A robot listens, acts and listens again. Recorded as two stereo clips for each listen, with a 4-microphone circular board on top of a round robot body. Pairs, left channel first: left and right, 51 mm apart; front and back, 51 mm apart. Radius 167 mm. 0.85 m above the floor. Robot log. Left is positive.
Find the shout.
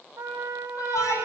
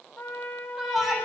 note: The shout: 95° left.
cmd yaw +95
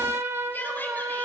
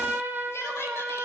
note: The shout is now 30° left.
cmd yaw +30
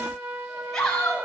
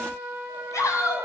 note: The shout is now 10° left.
cmd yaw +10
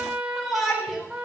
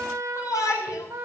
end: Facing the shout.